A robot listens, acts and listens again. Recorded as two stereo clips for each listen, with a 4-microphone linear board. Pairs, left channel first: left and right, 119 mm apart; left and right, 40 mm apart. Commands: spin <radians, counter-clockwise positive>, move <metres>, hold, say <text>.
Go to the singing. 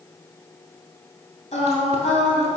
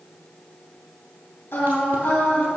spin 1.13
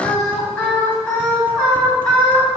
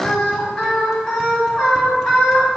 move 1.0
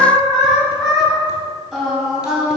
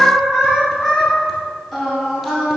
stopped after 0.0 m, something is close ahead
say Something is in my way. I am facing the singing but have not reached it.